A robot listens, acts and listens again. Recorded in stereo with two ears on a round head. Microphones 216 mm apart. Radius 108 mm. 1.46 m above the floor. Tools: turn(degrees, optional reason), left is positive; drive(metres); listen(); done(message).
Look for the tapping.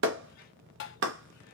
turn(degrees=50, reason="The tapping: about 50° left or 130° left.")
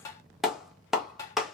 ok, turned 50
turn(degrees=15, reason="So it is at 15° left.")
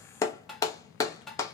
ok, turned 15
done("Found it: tapping, straight ahead, under 1 m away.")